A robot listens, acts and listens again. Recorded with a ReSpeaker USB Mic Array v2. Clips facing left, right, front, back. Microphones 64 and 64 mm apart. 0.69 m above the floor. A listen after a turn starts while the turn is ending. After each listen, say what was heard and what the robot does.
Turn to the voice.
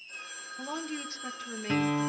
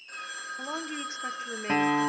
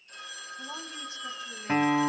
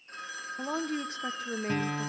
The woman speaking: 155° right. Turn 155° right.
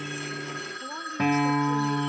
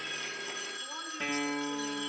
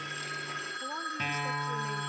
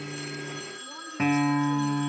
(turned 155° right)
Keep listening.
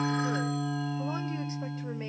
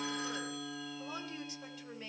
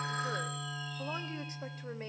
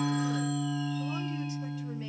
Keep listening.
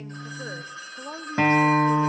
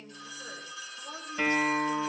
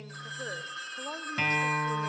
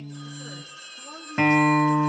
The woman speaking is now 40° left. Turn 40° left.
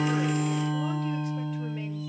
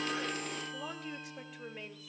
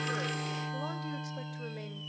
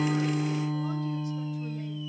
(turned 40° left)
Keep listening.
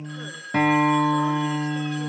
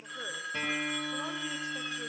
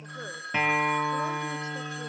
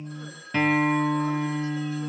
Keep listening.
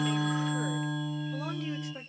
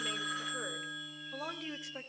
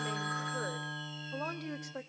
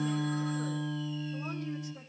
Facing the woman speaking.